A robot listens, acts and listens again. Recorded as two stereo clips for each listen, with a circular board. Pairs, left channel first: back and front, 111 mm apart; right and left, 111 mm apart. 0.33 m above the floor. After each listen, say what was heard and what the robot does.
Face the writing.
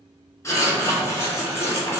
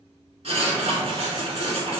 The writing: 115° left. Turn 115° left.
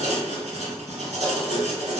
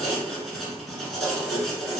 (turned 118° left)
Found it: writing, straight ahead.